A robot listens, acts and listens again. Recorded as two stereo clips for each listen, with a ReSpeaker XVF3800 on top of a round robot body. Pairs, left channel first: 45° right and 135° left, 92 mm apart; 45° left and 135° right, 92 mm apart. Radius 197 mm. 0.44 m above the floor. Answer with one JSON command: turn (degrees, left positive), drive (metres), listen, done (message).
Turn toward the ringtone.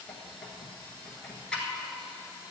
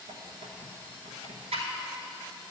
{"listen": true}
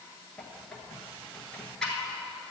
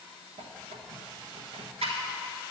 {"listen": true}
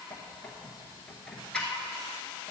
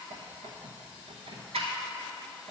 {"done": "I can't make out a ringtone, only a squeak."}